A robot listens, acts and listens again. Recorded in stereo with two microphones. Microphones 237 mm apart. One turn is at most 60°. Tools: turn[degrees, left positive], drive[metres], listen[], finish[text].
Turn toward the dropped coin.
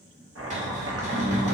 Action: turn[-30]
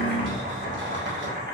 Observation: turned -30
Thought: So it is at 25° left.
Action: turn[25]
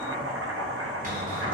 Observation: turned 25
Action: finish[I heard a dropped coin from this way, but can't make it out now.]